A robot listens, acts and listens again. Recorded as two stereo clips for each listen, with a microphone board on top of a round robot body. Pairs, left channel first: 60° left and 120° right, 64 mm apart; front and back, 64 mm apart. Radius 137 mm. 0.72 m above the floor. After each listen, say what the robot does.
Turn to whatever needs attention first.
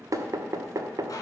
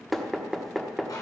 Keep listening.
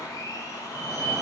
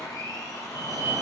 Turn 170° right.
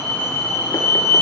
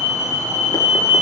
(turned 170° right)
Turn 60° right.
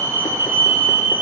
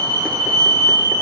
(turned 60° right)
Facing the fire alarm.